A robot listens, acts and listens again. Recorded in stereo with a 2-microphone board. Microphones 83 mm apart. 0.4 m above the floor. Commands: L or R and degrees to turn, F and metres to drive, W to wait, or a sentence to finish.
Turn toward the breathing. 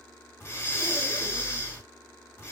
L35
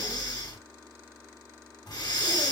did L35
L105
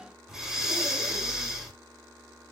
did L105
R10
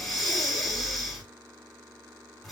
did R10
Found it: breathing, straight ahead.